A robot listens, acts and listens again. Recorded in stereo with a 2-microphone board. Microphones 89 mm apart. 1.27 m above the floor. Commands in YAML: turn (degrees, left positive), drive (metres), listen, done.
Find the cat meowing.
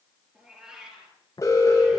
turn: -30
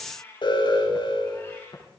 turn: 25
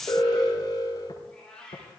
turn: 10
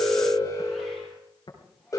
listen: true
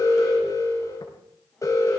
listen: true
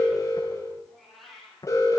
done: "Facing the cat meowing, over 4 m away."